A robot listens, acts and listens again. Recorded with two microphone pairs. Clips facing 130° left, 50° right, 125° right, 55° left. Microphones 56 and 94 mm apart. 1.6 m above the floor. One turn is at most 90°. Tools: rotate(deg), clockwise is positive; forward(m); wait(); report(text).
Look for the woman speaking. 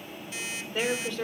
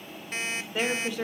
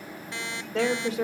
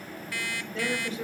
rotate(90)
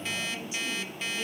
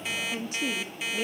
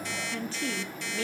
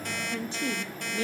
rotate(10)
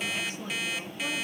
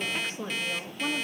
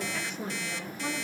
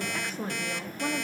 rotate(-10)
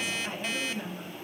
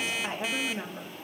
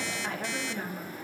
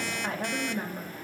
rotate(-10)
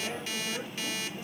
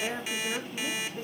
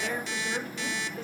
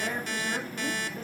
report("Facing the woman speaking, 2 to 4 m away.")